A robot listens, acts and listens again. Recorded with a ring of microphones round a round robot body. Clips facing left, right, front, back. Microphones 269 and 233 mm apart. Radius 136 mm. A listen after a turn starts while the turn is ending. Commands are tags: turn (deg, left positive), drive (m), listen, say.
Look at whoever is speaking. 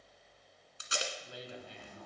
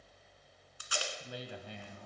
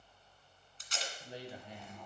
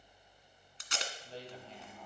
<turn deg="-75"/>
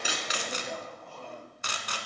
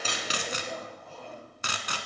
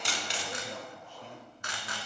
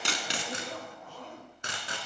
<listen/>
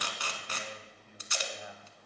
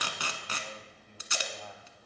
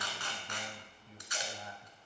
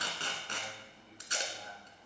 <turn deg="15"/>
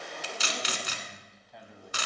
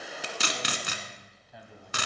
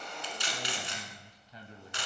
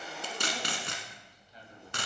<say>Facing the man speaking.</say>